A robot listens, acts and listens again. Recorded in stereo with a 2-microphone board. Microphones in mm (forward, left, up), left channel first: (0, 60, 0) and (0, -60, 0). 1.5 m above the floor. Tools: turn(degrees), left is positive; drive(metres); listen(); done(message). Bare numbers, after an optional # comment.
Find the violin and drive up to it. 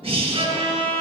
# The violin: about 60° right or 120° right.
turn(-60)
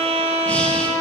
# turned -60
# So it is at 55° right.
turn(-55)
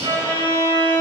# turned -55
# The violin is now 30° right.
turn(-30)
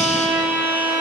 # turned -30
drive(1.0)
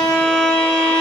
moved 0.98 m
drive(1.0)
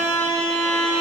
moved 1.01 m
# The violin is now 10° left.
turn(10)
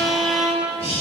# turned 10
drive(1.0)
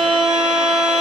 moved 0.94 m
drive(1.0)
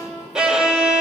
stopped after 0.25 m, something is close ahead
# The violin is now 10° right.
turn(-10)
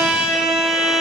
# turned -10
done("Arrived at the violin, straight ahead.")